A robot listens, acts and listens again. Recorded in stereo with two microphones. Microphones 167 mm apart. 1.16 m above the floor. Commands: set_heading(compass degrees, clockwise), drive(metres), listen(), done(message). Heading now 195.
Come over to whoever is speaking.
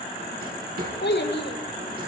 set_heading(120)
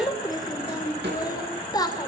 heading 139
set_heading(119)
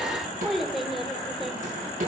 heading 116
drive(1.0)
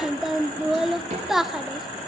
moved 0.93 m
drive(1.0)
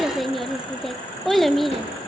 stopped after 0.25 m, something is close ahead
done("Arrived at the child speaking, straight ahead.")